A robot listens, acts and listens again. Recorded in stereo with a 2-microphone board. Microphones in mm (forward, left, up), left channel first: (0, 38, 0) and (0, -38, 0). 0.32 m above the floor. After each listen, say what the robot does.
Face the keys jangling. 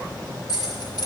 Turn 55° left.
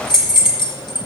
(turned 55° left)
Turn 70° left.
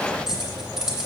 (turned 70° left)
Turn 10° right.
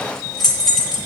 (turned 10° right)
Found it: keys jangling, straight ahead, 2 to 4 m away.